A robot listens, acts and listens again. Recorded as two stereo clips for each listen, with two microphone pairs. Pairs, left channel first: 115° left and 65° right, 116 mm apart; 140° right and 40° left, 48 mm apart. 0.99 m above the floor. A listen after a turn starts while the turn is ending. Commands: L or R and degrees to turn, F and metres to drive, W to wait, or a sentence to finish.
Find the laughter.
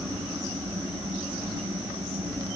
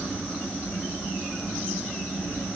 W
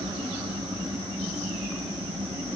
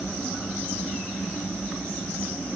W
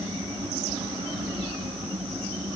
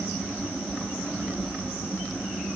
I can't make out laughter.